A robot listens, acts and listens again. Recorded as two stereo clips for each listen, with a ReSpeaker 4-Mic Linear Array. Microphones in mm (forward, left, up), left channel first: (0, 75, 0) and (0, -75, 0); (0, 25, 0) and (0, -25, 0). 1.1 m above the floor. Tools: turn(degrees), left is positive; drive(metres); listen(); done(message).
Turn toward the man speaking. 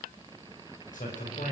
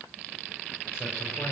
turn(degrees=60)
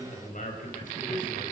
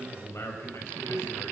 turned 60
turn(degrees=60)
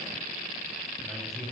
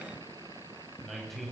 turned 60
done("Facing the man speaking, over 4 m away.")